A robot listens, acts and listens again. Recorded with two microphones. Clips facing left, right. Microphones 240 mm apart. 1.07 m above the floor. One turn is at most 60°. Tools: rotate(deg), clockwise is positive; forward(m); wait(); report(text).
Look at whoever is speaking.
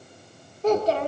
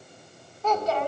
rotate(-40)
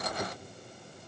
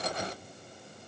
wait()
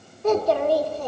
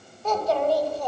rotate(-60)
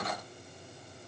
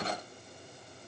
rotate(-40)
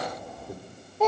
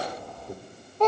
report("Found it: a child speaking, straight ahead.")